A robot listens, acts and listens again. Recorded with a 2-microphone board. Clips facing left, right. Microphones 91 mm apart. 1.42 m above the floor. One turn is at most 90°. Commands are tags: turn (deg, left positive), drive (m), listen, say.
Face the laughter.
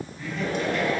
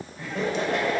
<turn deg="-90"/>
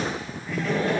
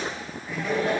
<say>Facing the laughter.</say>